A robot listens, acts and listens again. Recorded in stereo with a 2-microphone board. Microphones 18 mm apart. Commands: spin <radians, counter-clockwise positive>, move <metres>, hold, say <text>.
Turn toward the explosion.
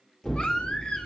spin 0.61
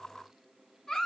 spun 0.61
hold
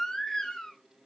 say I heard an explosion, but can't make it out now. It was about straight ahead or 110° left.